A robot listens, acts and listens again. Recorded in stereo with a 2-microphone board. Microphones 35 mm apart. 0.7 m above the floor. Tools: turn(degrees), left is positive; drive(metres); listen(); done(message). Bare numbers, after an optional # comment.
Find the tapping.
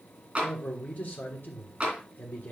# The tapping: about 30° right or 150° right.
turn(-30)
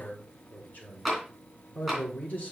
done("Facing the tapping.")